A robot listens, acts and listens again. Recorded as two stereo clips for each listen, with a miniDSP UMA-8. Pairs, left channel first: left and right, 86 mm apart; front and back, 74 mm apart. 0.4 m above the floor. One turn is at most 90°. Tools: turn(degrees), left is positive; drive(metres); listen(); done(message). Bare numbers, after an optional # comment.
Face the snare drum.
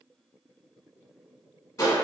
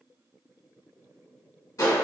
listen()
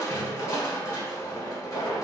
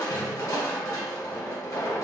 listen()
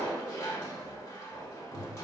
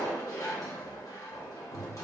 done("I can't make out a snare drum, only crushing.")